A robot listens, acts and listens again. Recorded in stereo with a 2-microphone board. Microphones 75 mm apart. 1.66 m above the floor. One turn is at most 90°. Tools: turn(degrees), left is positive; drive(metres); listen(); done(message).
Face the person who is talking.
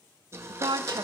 turn(degrees=-70)
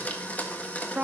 turn(degrees=-20)
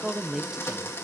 done("Facing the woman speaking.")